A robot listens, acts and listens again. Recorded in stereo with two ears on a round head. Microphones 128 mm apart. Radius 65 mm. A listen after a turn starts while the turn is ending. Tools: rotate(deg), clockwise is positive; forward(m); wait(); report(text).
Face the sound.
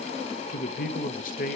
rotate(-65)
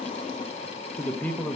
rotate(-10)
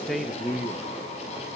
report("Found it: a man speaking, straight ahead, under 1 m away.")